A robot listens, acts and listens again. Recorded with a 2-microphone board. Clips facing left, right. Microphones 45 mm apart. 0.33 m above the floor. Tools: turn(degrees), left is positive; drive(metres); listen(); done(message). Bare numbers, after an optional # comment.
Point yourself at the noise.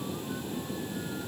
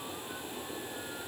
listen()
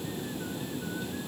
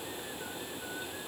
listen()
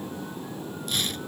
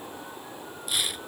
turn(-30)
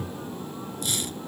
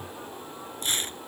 # So it is at 140° right.
turn(-140)
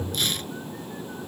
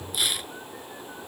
# The tearing paper is now 10° right.
turn(-10)
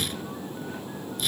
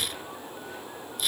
done("Facing the tearing paper.")